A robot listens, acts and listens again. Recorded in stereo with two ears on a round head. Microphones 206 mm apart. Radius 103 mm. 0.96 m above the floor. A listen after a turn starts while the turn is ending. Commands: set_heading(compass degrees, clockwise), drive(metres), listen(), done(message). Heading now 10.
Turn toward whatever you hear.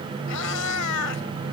set_heading(280)
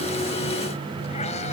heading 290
set_heading(280)
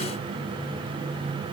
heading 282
listen()
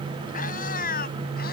set_heading(242)
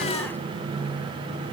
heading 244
listen()
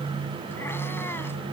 listen()
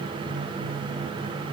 done("Facing where the cat meowing came from. I can't hear it now.")